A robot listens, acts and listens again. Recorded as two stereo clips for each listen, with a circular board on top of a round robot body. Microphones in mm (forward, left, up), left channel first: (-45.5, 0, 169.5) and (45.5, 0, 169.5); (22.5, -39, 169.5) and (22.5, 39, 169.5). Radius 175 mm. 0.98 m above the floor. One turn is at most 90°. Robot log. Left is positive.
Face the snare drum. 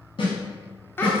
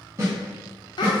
note: The snare drum: 150° left.
cmd yaw +90
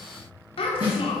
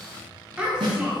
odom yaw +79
note: The snare drum is now 70° left.
cmd yaw +70
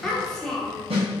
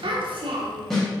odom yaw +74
end: Facing the snare drum, 1 to 2 m away.